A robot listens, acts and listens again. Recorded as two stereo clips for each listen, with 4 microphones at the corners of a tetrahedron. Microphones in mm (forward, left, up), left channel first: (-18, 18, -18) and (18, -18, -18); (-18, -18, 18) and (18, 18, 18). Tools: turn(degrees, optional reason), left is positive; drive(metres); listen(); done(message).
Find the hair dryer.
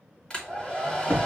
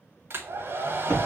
turn(degrees=65, reason="The hair dryer: 65° left.")
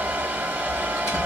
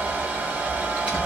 done("Facing the hair dryer.")